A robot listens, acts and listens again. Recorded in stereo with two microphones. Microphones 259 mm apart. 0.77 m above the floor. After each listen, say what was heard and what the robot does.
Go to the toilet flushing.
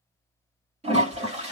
The toilet flushing: about 25° right or 155° right. Turn 25° right.
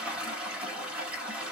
Drive 1.0 m forward.
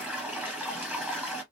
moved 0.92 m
The toilet flushing is now 10° right. Turn 10° right.
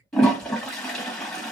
Drive 1.0 m forward.
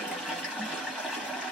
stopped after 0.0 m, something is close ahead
I am next to the toilet flushing.